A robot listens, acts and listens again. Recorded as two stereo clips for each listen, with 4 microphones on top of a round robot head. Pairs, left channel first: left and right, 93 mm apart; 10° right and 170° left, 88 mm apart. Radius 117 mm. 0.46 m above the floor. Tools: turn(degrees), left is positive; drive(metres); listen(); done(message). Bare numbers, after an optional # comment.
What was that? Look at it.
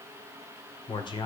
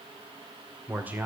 # The man speaking: 105° left.
turn(105)
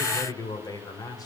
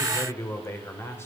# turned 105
# The man speaking is now 50° left.
turn(50)
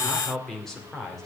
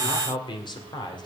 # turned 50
done("Found it: a man speaking, straight ahead, 2 to 4 m away.")